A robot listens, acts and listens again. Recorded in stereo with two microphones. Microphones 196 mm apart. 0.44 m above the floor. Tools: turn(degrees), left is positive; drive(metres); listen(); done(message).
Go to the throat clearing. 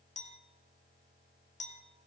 listen()
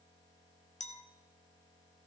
listen()
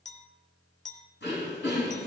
turn(degrees=65)
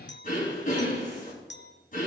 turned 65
turn(degrees=45)
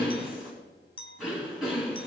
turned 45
drive(metres=1.0)
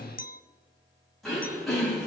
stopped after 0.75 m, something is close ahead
done("Something is in my way. I am facing the throat clearing but have not reached it.")